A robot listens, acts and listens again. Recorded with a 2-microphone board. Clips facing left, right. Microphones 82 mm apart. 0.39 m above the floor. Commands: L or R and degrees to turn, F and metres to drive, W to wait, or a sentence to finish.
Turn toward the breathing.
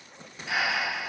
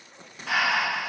R90
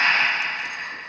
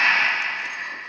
Facing the breathing.